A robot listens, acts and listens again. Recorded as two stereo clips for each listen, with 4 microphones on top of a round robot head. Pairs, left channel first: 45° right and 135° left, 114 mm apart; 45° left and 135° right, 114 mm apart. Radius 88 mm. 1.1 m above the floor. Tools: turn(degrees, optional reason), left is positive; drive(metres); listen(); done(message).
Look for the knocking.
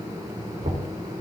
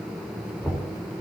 turn(degrees=115, reason="The knocking: 115° left.")
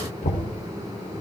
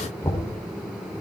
turn(degrees=-30, reason="The knocking is now 30° right.")
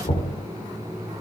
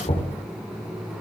done("Found it: knocking, straight ahead.")